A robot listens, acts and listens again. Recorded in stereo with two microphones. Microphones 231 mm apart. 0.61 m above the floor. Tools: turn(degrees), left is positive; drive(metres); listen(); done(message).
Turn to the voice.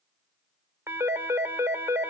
listen()
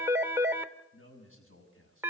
turn(degrees=65)
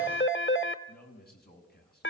turn(degrees=45)
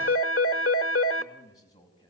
turn(degrees=15)
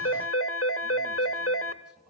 listen()
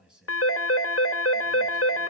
done("Found it: a man speaking, straight ahead.")